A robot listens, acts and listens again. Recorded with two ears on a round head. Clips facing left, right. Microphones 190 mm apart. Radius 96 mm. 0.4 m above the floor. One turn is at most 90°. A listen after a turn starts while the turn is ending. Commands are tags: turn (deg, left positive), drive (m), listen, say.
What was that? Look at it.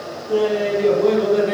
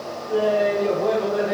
<turn deg="35"/>
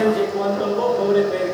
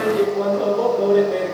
<say>Found it: laughter, straight ahead, over 4 m away.</say>